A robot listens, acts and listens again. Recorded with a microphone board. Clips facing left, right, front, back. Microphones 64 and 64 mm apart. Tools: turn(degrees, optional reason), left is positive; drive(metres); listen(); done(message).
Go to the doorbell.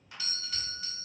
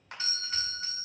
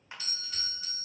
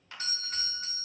turn(degrees=-140, reason="The doorbell: 140° right.")
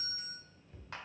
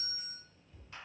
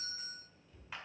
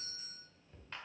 turn(degrees=10, reason="The doorbell is now 10° left.")
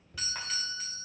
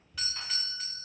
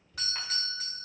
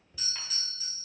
drive(metres=1.0)
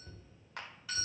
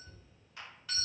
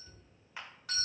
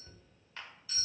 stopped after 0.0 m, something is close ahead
done("Blocked. The doorbell is further on, straight ahead.")